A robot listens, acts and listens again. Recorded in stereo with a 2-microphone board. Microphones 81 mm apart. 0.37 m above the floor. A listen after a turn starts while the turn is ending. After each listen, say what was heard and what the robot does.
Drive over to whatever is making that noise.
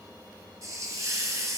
The hiss: about 45° right or 135° right. Turn 45° right.
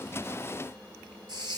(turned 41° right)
So it is at 90° right. Turn 90° right.
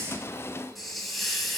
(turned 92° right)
Drive 1.0 m forward.
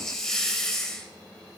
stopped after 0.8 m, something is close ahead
The hiss is now 10° left. Turn 10° left.
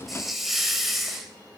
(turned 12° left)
I am next to the hiss.